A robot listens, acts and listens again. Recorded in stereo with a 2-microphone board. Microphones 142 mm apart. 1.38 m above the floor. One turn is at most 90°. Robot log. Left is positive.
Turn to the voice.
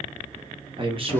note: The man speaking: about 40° right or 140° right.
cmd yaw -40
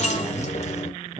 note: The man speaking: about 35° right or 145° right.
cmd yaw -35
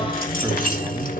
cmd idle
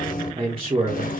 note: The man speaking: about 50° right or 130° right.
cmd yaw -50
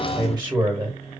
note: So it is at 20° right.
cmd yaw -20
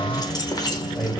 end: Facing the man speaking.